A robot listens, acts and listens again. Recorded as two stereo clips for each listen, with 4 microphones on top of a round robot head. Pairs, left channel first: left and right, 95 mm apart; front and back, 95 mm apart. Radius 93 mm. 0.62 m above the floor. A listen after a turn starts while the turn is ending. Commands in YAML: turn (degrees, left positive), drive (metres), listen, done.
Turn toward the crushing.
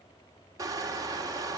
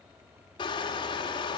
turn: -40
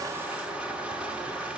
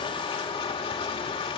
turn: -10
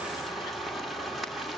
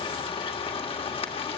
done: "Facing the crushing, 1 to 2 m away."